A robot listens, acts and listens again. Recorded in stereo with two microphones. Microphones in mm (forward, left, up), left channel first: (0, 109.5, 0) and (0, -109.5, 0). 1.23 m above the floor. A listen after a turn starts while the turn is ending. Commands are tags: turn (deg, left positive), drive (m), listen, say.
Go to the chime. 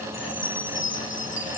<turn deg="65"/>
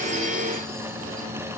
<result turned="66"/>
<listen/>
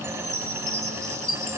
<drive m="1.0"/>
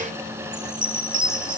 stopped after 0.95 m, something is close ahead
<say>Arrived at the chime, straight ahead.</say>